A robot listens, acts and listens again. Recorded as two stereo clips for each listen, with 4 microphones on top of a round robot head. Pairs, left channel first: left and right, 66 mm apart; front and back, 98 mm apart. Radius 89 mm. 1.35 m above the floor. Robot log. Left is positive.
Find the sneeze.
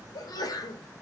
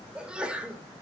note: The sneeze: 100° left.
cmd yaw +100
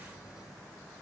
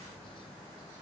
end: I heard a sneeze from this way, but can't make it out now.